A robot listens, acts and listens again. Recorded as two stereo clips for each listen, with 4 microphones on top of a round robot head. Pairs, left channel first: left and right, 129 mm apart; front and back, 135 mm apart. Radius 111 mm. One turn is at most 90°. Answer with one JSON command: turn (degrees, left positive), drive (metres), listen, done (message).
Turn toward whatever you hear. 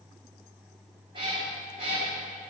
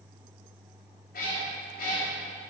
{"turn": -35}
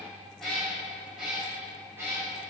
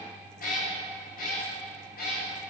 {"turn": -15}
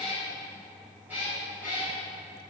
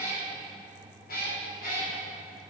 {"turn": -10}
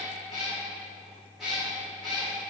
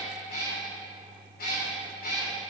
{"done": "Facing the cat meowing."}